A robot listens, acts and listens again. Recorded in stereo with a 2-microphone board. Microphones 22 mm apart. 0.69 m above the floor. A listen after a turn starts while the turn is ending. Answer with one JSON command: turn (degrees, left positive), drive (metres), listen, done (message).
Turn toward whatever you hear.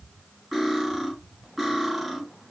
{"turn": -30}
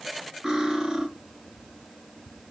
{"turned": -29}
{"turn": -140}
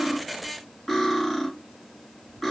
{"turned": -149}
{"turn": 10}
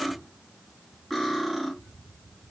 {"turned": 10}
{"done": "Facing the cutlery clinking."}